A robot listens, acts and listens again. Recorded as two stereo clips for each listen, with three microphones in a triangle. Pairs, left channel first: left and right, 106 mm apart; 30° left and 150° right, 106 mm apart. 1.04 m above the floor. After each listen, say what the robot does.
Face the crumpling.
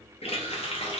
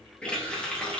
Keep listening.
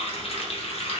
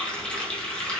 Keep listening.
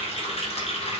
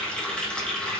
I can't make out crumpling to turn to.